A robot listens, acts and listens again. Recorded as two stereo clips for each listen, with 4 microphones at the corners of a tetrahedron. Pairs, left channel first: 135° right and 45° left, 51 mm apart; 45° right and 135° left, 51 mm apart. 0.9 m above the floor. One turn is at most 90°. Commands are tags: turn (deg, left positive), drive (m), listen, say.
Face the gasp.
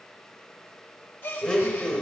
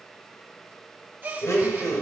<turn deg="-90"/>
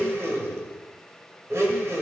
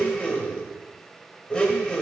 <turn deg="-75"/>
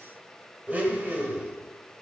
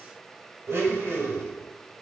<say>Facing where the gasp came from. I can't hear it now.</say>